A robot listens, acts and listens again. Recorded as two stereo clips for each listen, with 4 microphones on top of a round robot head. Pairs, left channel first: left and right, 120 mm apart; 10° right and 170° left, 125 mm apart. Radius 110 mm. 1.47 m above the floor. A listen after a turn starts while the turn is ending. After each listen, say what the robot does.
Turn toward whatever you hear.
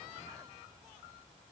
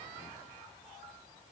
Keep listening.
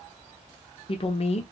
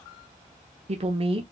Turn 125° left.
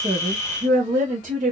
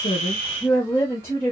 Turn 85° right.
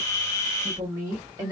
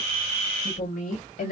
Turn 20° right.
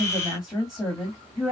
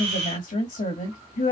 Found it: a woman speaking, straight ahead, 2 to 4 m away.